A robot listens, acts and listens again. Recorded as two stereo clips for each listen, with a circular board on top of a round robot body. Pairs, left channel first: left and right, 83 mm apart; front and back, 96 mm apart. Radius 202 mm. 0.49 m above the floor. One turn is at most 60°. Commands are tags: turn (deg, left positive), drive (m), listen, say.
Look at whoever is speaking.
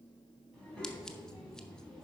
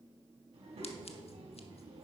<turn deg="60"/>
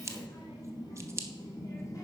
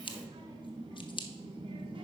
<turn deg="60"/>
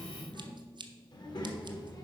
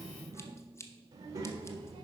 <turn deg="60"/>
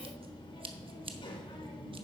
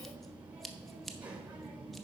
<turn deg="60"/>
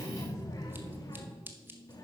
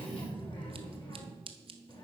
<turn deg="35"/>
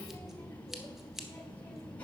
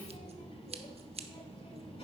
<turn deg="15"/>
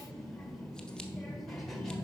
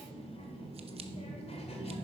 <say>Found it: a child speaking, straight ahead, 1 to 2 m away.</say>